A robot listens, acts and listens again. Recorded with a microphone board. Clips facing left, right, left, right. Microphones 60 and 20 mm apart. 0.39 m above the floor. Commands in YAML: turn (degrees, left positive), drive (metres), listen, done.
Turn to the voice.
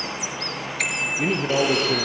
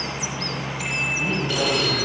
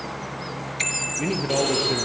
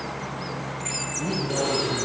turn: 75
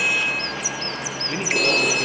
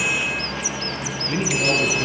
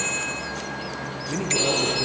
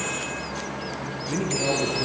done: "Found it: a man speaking, straight ahead."